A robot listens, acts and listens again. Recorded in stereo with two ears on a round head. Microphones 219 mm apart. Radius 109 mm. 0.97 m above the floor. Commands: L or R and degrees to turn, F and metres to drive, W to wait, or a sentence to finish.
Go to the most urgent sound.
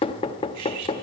W
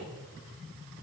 W
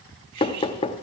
I can't make out anything urgent, only cutlery clinking and knocking.